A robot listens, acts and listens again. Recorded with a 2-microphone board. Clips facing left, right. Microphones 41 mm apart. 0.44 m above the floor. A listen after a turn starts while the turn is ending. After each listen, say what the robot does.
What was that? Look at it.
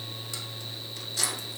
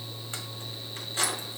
Turn 25° right.
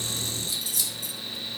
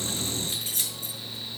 Turn 35° right.
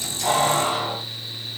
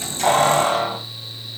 Turn 125° right.
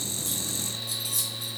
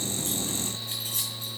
Turn 40° right.
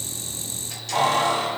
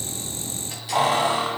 Turn 15° right.
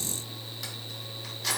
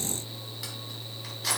Facing the keys jangling.